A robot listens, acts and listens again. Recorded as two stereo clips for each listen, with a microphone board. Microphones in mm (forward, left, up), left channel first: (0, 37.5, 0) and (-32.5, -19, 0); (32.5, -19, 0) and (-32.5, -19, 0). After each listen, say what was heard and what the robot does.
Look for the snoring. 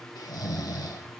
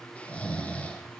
The snoring: 70° left. Turn 70° left.
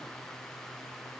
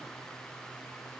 Keep listening.
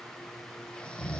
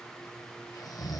The snoring is now 15° right. Turn 15° right.
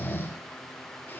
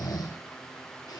Facing the snoring.